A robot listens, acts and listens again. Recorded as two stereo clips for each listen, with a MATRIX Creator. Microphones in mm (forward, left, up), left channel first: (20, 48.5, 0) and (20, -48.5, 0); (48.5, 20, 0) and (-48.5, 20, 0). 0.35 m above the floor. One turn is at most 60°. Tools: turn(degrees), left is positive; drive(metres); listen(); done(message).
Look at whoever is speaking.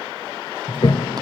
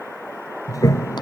listen()
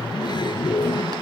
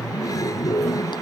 listen()
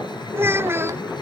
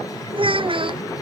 turn(degrees=-60)
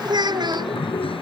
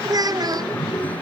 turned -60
turn(degrees=-60)
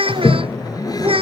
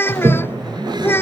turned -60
turn(degrees=-60)
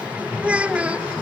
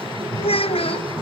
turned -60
turn(degrees=-10)
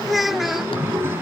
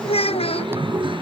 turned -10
done("Found it: a child speaking, straight ahead.")